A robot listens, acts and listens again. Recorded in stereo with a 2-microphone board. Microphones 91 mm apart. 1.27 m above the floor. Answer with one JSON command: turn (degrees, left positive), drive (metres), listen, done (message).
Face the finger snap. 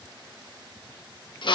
{"listen": true}
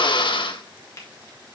{"turn": 35}
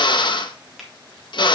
{"done": "Found it: a finger snap, straight ahead."}